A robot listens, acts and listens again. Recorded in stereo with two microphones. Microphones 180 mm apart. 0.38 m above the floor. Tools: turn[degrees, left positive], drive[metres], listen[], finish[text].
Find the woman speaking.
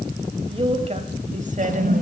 Thought: The woman speaking: about 45° right or 135° right.
Action: turn[-45]
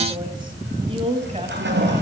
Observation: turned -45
Thought: So it is at 35° right.
Action: turn[-35]
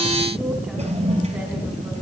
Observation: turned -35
Action: listen[]
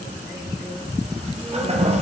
Action: listen[]
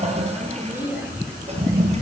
Thought: The woman speaking is now 10° right.
Action: turn[-10]
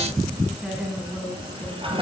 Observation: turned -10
Action: finish[Facing the woman speaking.]